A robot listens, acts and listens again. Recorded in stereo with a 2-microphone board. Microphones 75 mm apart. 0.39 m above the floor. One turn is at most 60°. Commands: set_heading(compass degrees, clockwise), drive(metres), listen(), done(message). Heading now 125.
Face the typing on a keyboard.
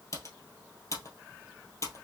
set_heading(80)
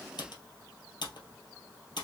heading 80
set_heading(20)
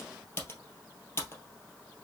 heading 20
set_heading(345)
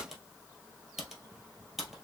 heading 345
done("Found it: typing on a keyboard, straight ahead, 1 to 2 m away.")